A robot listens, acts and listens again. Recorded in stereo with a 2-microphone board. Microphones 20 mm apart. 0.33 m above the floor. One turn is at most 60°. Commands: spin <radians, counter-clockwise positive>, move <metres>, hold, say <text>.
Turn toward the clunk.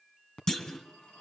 spin 0.52
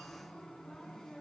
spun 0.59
hold
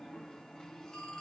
say I heard a clunk, but can't make it out now. It was about straight ahead or 115° left.